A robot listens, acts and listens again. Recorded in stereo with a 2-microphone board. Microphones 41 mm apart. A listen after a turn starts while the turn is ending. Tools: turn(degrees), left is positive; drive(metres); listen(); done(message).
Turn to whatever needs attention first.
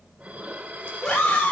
turn(degrees=20)
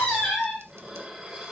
done("Found it: a scream, straight ahead.")